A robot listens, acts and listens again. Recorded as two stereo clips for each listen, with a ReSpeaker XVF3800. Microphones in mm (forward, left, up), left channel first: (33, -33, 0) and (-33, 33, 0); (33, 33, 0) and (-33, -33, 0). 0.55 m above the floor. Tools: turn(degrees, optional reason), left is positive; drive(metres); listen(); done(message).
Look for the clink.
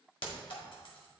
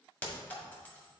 turn(degrees=-25, reason="The clink: 25° right.")
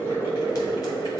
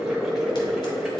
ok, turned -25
listen()
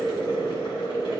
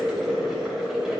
listen()
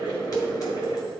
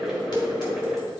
done("Facing where the clink came from. I can't hear it now.")